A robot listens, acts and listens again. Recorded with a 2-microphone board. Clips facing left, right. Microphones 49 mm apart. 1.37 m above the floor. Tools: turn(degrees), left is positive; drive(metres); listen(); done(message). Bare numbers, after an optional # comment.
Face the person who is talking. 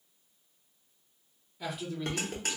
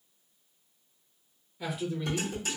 turn(-30)
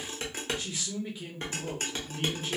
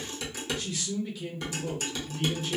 # So it is at 25° left.
turn(25)
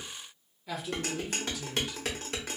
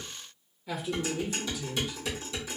done("Facing the man speaking, under 1 m away.")